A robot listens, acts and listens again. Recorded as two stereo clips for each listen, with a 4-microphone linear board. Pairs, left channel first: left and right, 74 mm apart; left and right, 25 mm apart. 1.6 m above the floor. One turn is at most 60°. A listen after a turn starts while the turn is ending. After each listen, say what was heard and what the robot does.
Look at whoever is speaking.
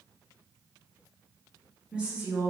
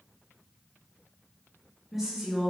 The woman speaking: about 20° right or 160° right. Turn 20° right.
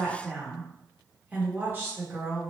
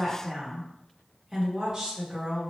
The woman speaking: about 35° right or 145° right. Turn 35° right.
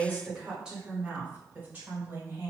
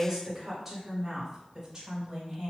The woman speaking: about 25° right or 155° right. Turn 25° right.
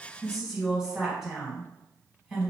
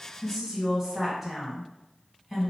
Facing the woman speaking, 1 to 2 m away.